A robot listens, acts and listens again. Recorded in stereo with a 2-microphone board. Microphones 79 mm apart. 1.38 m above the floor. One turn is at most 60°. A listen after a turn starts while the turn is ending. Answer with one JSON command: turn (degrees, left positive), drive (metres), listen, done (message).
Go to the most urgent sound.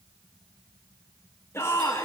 {"turn": 35}
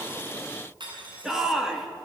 {"drive": 1.0}
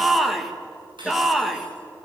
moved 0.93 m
{"drive": 1.0}
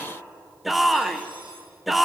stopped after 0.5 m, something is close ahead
{"done": "I am next to the shout."}